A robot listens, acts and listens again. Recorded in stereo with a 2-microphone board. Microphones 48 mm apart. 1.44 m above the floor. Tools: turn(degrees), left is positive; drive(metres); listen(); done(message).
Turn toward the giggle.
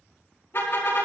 listen()
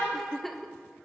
turn(degrees=30)
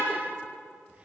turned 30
listen()
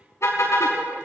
listen()
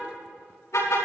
done("I heard a giggle, but can't make it out now. It was about 25° right or 145° left.")